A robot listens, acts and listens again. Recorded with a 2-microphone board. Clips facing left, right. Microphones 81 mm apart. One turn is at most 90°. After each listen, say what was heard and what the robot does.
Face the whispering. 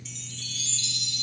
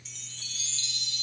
Keep listening.
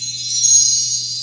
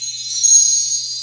Keep listening.
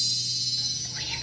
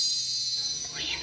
The whispering: about 70° right or 110° right. Turn 70° right.
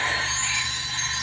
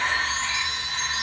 So it is at 25° right. Turn 25° right.
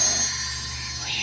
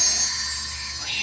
Facing the whispering.